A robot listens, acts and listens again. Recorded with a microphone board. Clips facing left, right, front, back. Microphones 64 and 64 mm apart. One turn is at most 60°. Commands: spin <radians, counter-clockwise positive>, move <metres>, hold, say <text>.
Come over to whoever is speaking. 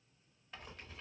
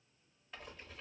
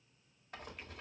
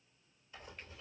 hold
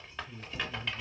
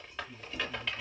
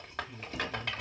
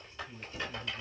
spin 1.05
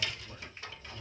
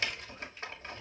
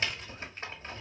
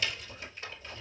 spin 1.05
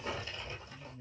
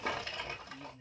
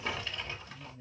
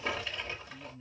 spin 0.52
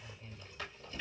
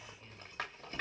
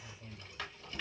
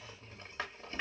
move 1.0
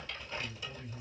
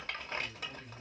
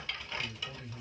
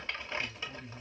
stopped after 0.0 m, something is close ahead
spin 0.17
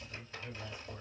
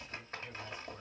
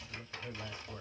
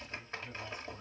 say Something is in my way. I am facing the man speaking but have not reached it.